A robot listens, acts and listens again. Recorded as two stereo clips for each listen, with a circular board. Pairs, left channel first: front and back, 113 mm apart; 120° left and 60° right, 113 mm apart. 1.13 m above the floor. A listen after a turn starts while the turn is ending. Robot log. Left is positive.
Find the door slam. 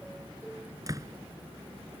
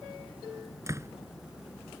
note: The door slam: 120° right.
cmd yaw -120
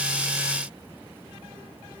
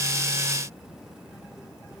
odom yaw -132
note: Nothing new. It was at 10° left.
cmd yaw +10
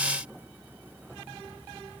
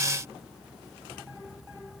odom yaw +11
end: I heard a door slam from this way, but can't make it out now.